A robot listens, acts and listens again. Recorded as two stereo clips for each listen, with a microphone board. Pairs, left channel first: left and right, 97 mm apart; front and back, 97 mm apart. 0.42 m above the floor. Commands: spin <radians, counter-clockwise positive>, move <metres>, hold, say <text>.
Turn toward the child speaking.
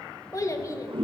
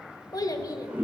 spin 0.70
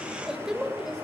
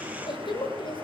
say Facing the child speaking, 1 to 2 m away.